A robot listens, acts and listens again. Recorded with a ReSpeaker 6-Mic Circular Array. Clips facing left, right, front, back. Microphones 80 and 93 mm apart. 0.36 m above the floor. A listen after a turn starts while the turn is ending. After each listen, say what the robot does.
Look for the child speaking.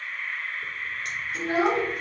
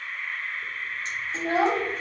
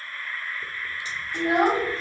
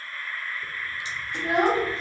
Turn 70° right.
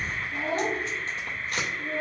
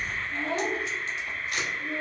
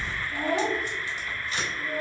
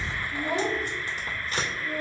Turn 45° left.
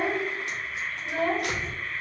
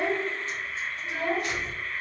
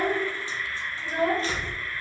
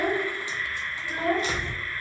Turn 35° left.
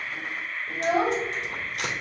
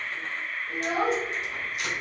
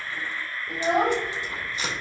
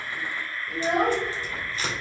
Turn 20° left.
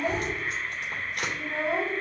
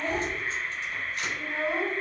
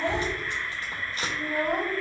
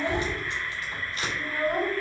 Found it: a child speaking, straight ahead, 1 to 2 m away.